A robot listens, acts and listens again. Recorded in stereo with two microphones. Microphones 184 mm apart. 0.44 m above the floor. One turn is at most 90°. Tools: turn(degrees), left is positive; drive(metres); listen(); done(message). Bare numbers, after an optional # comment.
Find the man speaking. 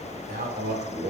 # The man speaking: about 60° right or 120° right.
turn(-60)
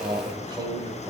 # So it is at 20° right.
turn(-20)
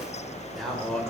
done("Found it: a man speaking, straight ahead, 1 to 2 m away.")